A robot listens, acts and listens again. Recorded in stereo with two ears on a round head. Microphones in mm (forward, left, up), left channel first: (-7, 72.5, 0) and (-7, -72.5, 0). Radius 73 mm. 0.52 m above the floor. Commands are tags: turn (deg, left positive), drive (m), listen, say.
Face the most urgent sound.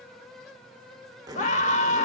<turn deg="45"/>
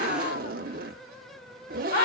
<turn deg="75"/>
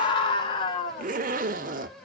<turn deg="35"/>
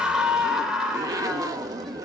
<say>Found it: a scream, straight ahead.</say>